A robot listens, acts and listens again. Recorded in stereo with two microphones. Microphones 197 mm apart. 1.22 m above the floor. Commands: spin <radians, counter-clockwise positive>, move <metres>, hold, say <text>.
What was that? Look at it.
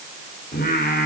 spin 0.87
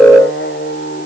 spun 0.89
spin 1.22
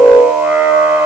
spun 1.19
say Found it: singing, straight ahead, over 4 m away.